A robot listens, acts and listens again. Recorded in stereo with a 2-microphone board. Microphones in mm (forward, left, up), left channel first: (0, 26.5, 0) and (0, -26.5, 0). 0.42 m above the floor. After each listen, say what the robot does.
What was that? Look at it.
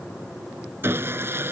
Turn 45° right.
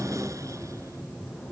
Keep listening.
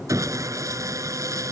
Turn 90° right.
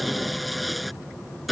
Facing the sawing.